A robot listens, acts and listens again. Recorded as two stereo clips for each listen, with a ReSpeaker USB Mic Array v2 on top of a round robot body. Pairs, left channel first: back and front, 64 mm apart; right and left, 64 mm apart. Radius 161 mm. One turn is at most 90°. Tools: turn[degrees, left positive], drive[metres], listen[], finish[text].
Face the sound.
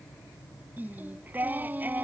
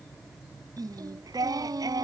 Thought: The singing: 65° left.
Action: turn[65]
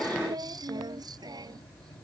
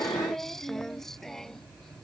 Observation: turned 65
Action: finish[Found it: singing, straight ahead.]